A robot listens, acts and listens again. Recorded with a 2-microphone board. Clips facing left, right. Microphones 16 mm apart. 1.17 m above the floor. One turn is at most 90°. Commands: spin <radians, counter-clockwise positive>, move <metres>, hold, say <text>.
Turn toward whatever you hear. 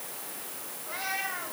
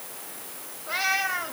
spin -1.22
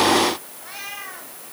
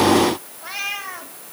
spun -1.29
spin -0.44
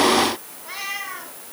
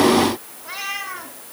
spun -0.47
say Facing the cat meowing, 2 to 4 m away.